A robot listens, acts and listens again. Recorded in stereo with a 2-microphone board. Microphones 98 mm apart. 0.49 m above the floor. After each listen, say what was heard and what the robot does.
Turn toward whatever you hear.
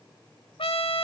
The trumpet: about 70° left or 110° left. Turn 70° left.
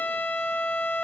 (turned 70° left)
So it is at 20° left. Turn 20° left.
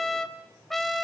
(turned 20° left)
Facing the trumpet.